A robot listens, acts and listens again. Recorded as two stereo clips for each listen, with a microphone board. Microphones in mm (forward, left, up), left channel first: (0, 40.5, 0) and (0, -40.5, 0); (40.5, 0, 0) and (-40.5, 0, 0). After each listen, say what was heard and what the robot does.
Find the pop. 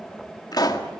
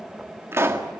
The pop: 125° left. Turn 125° left.
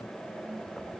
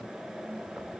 I heard a pop from this way, but can't make it out now.